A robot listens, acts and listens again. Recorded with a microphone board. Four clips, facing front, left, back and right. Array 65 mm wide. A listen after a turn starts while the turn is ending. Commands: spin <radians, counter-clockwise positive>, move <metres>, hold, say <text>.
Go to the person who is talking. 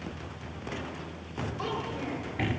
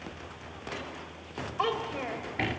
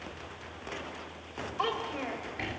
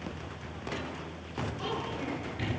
spin 2.01
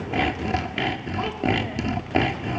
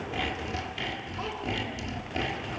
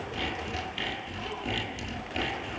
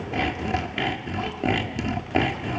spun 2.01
hold
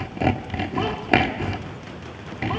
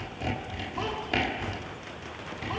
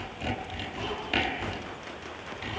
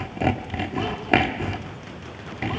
hold
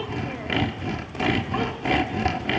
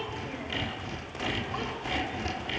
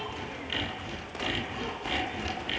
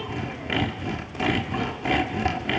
say Facing where the child speaking came from. I can't hear it now. I did not reach it.